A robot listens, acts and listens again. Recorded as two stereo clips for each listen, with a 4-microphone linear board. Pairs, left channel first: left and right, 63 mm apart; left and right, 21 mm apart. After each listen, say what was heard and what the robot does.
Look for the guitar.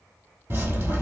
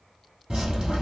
Keep listening.
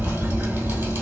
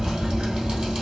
Keep listening.
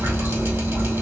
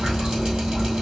I can't make out a guitar to turn to.